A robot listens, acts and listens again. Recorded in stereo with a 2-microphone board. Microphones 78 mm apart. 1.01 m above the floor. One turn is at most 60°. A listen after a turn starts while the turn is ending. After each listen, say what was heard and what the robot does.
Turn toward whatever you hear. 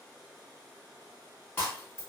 The breaking glass: about 30° left or 150° left. Turn 30° left.
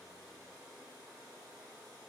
Keep listening.
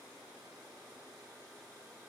I heard breaking glass, but can't make it out now. It was about straight ahead or 120° left.